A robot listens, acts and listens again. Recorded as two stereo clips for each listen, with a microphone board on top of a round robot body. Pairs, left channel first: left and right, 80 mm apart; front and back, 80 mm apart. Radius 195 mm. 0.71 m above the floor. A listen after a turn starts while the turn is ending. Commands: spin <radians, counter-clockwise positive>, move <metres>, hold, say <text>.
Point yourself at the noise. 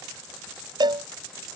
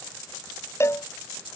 spin -1.05
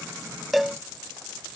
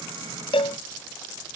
say Found it: a cowbell, straight ahead.